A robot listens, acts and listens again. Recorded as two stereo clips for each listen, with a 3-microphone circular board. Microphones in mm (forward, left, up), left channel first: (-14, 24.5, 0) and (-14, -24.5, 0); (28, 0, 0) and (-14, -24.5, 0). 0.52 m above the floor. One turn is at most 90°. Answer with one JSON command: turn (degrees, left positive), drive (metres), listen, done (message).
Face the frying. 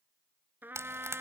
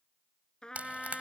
{"turn": -90}
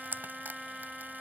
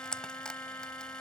{"turn": -45}
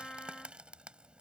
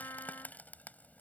{"listen": true}
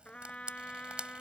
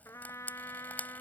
{"turn": -20}
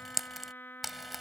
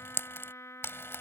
{"done": "Facing the frying."}